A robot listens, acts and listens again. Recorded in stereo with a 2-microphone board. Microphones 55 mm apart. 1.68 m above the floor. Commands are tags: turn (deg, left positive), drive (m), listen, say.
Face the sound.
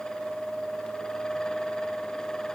<listen/>
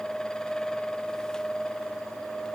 <listen/>
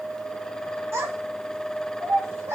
<turn deg="-60"/>
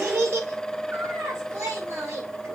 <turn deg="-60"/>
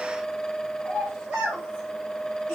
<say>Found it: a child speaking, straight ahead, over 4 m away.</say>